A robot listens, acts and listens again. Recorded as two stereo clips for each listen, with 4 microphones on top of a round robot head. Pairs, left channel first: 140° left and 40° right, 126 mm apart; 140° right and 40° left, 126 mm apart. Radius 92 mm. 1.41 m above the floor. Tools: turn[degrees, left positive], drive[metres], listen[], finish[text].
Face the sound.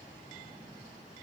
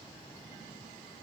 Action: listen[]
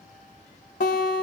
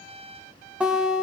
Thought: The guitar: 120° left.
Action: turn[120]
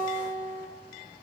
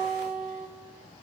Thought: The guitar is now 15° left.
Action: turn[15]
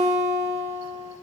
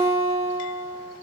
Action: finish[Found it: a guitar, straight ahead, 1 to 2 m away.]